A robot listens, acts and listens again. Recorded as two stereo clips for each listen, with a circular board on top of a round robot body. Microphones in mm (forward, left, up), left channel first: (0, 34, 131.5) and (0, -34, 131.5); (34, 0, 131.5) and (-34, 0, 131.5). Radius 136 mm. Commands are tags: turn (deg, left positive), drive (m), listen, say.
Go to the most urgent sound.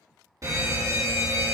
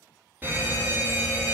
<turn deg="-120"/>
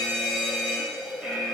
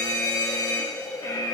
<drive m="1.0"/>
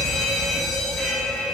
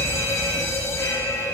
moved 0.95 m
<drive m="1.0"/>
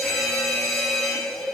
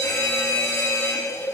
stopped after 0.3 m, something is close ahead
<say>Arrived at the fire alarm, straight ahead.</say>